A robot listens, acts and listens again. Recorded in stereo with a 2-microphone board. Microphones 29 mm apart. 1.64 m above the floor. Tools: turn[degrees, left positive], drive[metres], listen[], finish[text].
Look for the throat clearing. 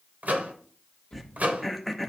Action: turn[30]
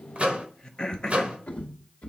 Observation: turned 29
Thought: So it is at 150° left.
Action: turn[150]
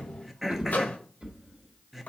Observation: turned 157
Action: finish[Facing the throat clearing.]